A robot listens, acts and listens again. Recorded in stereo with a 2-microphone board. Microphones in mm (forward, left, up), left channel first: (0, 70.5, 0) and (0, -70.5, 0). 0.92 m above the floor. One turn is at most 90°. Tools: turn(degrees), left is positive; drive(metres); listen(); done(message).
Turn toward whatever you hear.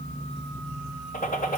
turn(degrees=90)
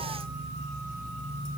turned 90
done("Facing where the gunshot came from. I can't hear it now.")